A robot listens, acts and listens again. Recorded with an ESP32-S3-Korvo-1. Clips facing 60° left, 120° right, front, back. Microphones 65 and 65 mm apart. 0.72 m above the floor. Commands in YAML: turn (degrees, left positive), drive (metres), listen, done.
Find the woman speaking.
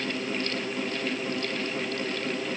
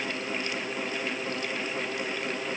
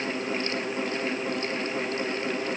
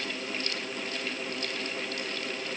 listen: true
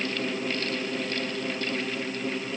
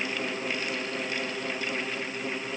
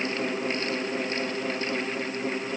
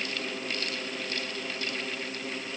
listen: true
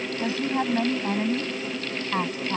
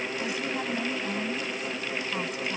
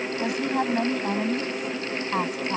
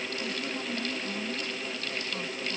done: "Facing the woman speaking."